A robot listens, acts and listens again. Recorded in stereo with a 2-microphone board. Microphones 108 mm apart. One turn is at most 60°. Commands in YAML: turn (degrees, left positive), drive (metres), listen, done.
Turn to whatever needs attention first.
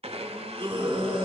turn: -55
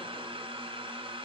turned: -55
listen: true
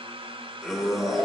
done: "Facing the scream, 2 to 4 m away."